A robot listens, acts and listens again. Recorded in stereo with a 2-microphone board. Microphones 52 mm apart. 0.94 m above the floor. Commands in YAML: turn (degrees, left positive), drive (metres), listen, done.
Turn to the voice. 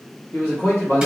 turn: 55
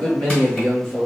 turn: 35
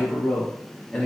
turn: 15
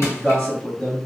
turn: 15
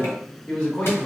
turn: 25
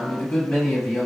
turn: 15
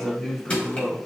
done: "Facing the man speaking."